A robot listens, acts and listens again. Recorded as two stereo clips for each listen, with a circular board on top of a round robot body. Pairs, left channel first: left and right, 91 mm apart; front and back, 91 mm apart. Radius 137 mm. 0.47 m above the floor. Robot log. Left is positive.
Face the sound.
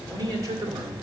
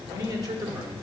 note: The man speaking: 140° right.
cmd yaw -140
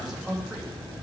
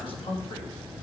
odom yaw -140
note: The man speaking is now 10° right.
cmd yaw -10
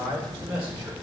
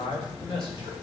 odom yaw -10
note: The man speaking is now 15° right.
cmd yaw -15
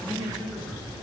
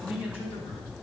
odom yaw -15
end: Facing the man speaking.